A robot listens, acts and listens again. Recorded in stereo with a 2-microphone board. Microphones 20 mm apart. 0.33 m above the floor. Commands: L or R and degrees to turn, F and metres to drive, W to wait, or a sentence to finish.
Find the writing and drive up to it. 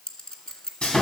W
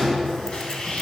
W
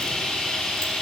I can't make out writing to turn to.